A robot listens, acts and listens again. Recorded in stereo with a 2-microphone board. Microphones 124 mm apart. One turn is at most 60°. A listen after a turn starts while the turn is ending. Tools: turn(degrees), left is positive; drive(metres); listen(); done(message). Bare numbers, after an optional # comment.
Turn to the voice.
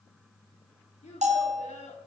# The child speaking: about 65° left or 115° left.
turn(60)
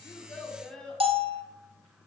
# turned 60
done("Facing the child speaking, 2 to 4 m away.")